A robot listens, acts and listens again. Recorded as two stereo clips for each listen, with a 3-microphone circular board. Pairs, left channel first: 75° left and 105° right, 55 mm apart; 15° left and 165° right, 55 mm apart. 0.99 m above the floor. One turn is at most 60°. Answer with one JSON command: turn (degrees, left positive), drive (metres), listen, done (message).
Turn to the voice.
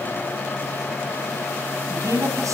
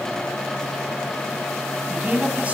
{"turn": -60}
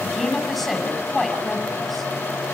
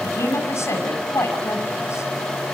{"turn": -20}
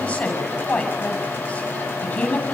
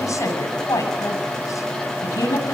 {"done": "Found it: a woman speaking, straight ahead, over 4 m away."}